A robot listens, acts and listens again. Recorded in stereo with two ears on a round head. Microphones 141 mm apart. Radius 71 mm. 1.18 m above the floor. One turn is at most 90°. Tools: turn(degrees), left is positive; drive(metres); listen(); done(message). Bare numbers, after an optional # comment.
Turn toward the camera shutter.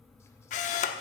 # The camera shutter: about 50° left or 130° left.
turn(50)
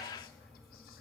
listen()
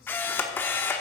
# So it is at 15° left.
turn(15)
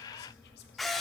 done("Found it: a camera shutter, straight ahead, 1 to 2 m away.")